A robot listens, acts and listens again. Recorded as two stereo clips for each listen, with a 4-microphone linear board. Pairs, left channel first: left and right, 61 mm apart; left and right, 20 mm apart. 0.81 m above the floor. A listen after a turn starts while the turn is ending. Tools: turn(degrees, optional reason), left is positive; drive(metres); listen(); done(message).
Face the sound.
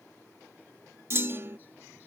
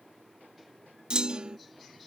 turn(degrees=-45, reason="The clunk: about 45° right or 135° right.")
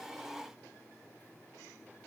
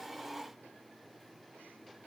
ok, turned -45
listen()
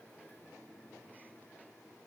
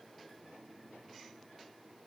done("I heard a clunk, but can't make it out now. It was about straight ahead or 90° right.")